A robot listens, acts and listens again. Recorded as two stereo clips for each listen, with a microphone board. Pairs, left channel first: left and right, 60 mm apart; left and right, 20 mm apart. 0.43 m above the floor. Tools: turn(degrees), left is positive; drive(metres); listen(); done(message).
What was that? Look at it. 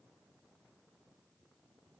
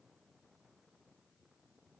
listen()
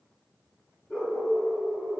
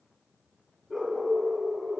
turn(degrees=25)
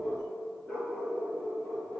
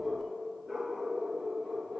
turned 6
turn(degrees=30)
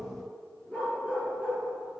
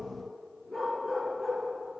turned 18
turn(degrees=20)
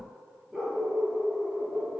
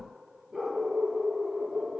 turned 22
done("Found it: a dog barking, straight ahead.")